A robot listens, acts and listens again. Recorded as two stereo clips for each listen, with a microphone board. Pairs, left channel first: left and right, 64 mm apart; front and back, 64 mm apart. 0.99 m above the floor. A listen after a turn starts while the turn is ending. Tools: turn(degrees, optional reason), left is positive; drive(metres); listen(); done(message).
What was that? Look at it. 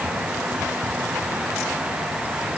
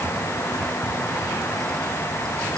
listen()
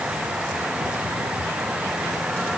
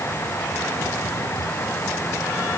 listen()
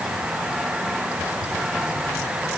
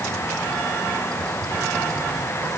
done("I can't make out anything.")